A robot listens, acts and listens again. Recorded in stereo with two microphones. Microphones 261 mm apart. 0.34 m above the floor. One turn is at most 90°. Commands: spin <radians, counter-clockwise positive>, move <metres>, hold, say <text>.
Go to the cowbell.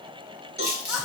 spin -0.70
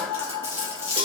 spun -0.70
hold
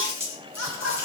hold
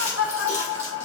say I heard a cowbell, but can't make it out now. It was about straight ahead or 100° right. I did not reach it.